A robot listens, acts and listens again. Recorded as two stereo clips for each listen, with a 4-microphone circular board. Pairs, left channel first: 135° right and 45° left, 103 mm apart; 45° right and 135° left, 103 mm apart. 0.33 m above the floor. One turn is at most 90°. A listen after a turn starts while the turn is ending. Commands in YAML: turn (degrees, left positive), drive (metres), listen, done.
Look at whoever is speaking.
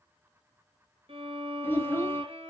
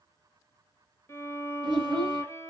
turn: 90
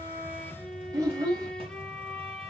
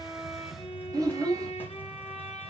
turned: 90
turn: 90
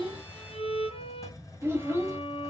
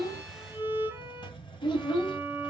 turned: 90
turn: -15
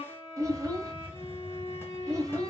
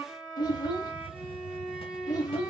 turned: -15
done: "Found it: a child speaking, straight ahead."